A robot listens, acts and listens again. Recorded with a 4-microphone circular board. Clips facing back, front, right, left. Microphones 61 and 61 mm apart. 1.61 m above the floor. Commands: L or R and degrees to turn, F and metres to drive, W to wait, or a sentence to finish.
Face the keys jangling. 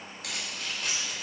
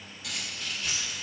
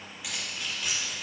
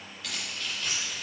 R170
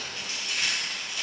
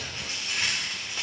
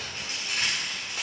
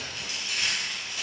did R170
R50
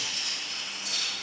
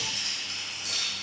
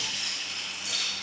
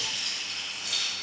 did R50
R10
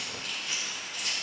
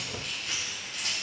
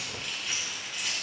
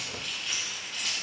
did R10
R10
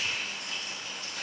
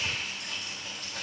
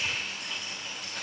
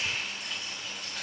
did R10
Facing the keys jangling, 2 to 4 m away.